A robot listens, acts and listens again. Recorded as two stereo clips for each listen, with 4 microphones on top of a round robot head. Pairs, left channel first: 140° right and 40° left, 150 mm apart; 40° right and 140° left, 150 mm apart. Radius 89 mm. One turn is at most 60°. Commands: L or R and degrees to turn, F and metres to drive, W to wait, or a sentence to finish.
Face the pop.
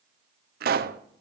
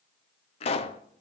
L10
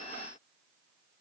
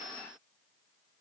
Facing where the pop came from. I can't hear it now.